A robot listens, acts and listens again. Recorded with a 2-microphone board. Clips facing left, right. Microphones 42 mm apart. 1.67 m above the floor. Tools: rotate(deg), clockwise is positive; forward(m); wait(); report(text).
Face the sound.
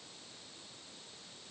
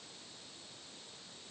wait()
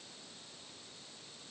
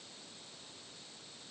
wait()
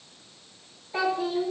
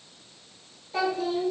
rotate(-30)
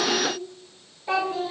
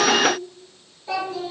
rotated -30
rotate(-150)
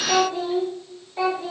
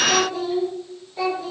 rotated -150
rotate(-30)
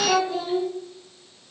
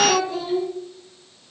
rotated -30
report("Facing the child speaking, 2 to 4 m away.")